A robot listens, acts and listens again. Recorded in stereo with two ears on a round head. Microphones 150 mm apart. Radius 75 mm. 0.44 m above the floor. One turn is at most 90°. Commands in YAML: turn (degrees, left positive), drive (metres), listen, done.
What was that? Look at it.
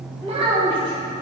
turn: -30
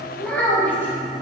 turn: 10
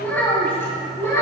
turn: 20
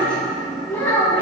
turn: 15
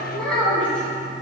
done: "Facing the child speaking."